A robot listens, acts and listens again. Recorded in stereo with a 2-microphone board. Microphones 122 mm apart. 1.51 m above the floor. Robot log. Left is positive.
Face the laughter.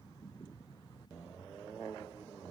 cmd idle
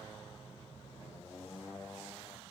cmd idle
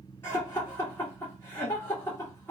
note: The laughter: about 20° left or 160° left.
cmd yaw +20
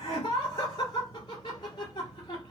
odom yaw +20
note: So it is at 140° left.
cmd yaw +140
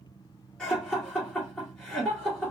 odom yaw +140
note: The laughter is now 10° left.
cmd yaw +10
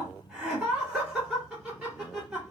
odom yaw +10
end: Found it: laughter, straight ahead, 1 to 2 m away.